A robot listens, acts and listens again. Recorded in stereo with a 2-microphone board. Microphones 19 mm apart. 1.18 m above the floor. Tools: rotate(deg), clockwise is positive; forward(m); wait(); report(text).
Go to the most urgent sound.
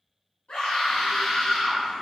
rotate(-90)
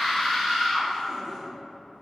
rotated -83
forward(1.0)
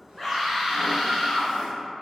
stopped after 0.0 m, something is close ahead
report("Something is in my way. I am facing the scream but have not reached it.")